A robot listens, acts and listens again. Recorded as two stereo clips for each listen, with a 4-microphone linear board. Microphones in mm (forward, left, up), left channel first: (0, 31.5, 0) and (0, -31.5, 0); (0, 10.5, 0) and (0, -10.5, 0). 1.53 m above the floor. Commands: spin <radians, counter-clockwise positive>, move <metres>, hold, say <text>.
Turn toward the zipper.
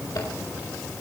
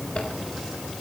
hold
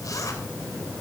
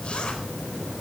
hold
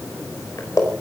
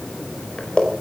spin 1.05
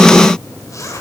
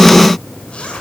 spin 0.96
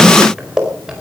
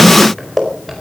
spin -0.17
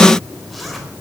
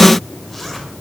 hold
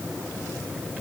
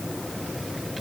hold
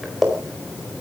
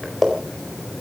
say Facing the zipper.